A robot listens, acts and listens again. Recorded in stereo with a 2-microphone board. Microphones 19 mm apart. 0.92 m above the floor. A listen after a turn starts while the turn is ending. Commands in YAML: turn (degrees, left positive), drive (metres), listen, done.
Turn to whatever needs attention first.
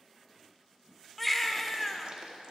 turn: 30
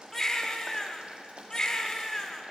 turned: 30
turn: 145
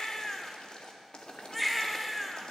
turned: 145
done: "Facing the baby crying."